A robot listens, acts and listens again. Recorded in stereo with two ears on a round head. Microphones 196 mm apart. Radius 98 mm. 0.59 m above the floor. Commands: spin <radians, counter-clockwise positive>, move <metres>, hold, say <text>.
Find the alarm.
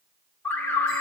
spin 0.52
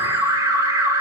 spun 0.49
spin -0.35
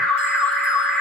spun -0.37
say Found it: an alarm, straight ahead.